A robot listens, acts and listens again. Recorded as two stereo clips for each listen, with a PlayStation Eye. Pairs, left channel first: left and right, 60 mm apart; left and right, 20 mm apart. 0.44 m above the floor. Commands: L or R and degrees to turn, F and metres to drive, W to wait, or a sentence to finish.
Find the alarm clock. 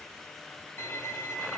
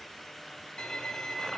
W
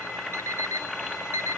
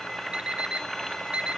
R65
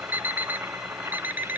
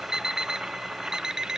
R40
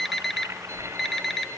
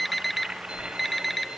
Found it: an alarm clock, straight ahead, under 1 m away.